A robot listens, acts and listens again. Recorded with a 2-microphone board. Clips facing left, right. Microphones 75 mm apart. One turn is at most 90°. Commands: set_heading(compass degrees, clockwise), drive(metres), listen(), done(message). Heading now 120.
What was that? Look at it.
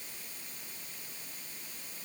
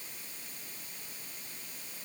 listen()
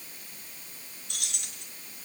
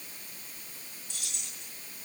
set_heading(55)
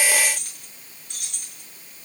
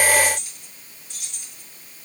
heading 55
set_heading(355)
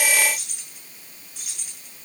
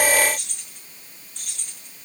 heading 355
done("Found it: keys jangling, straight ahead, over 4 m away.")